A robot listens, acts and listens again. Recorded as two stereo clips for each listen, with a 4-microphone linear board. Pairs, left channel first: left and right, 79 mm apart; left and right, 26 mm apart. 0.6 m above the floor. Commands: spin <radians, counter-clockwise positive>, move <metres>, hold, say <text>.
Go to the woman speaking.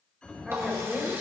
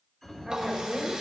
spin -0.52
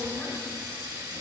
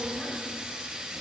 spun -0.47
hold
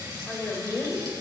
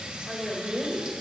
spin 0.44
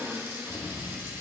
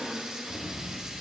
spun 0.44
move 1.0
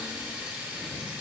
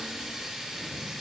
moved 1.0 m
hold
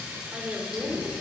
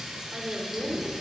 move 1.0
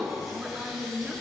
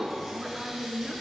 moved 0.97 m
spin -0.44
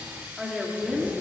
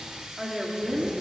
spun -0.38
move 1.0
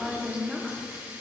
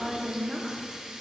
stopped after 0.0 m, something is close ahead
say Arrived at the woman speaking, straight ahead.